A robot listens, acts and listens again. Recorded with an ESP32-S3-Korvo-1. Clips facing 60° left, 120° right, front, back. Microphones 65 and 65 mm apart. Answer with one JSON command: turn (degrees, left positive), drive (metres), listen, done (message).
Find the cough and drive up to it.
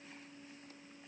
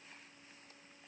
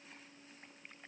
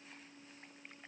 {"listen": true}
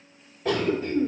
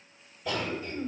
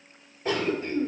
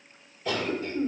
{"turn": 45}
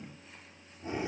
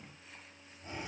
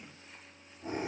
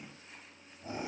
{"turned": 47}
{"drive": 1.0}
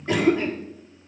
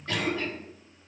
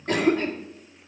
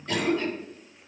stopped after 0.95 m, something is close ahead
{"done": "I am next to the cough."}